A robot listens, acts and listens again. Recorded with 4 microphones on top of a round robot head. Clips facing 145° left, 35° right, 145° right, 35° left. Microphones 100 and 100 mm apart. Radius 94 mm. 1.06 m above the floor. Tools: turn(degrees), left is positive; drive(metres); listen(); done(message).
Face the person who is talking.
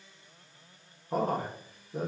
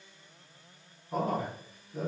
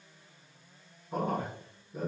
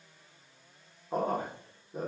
turn(degrees=95)
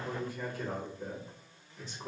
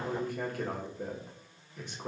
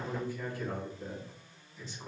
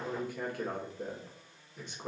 done("Facing the man speaking, 1 to 2 m away.")